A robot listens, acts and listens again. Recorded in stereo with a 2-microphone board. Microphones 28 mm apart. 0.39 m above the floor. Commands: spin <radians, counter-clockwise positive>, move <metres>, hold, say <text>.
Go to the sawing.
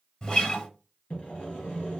spin 1.22
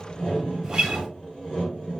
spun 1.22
spin 0.61
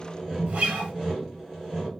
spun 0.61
spin -0.17
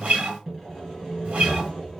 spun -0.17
move 1.0
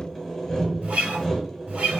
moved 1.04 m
spin 0.17
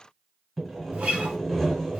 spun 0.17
move 1.0
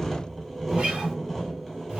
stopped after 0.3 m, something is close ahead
say Arrived at the sawing, straight ahead.